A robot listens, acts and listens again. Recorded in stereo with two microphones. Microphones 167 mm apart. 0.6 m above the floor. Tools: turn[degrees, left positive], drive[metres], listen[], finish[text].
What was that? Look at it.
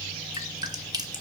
Thought: The dripping: about 25° right or 155° right.
Action: turn[-25]
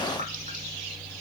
Action: listen[]
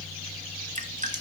Thought: So it is at 125° right.
Action: turn[-125]
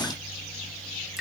Action: listen[]
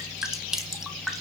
Action: finish[Found it: dripping, straight ahead, 1 to 2 m away.]